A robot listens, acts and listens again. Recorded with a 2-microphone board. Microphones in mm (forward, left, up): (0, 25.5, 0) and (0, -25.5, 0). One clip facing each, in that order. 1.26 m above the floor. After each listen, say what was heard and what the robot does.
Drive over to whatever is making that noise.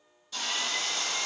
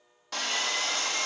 Turn 90° right.
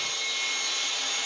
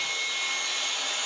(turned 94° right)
So it is at 10° right. Turn 10° right.
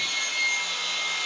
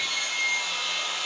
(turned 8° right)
Drive 1.0 m forward.
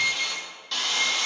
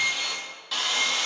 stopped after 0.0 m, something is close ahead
Something is in my way. I am facing the sawing but have not reached it.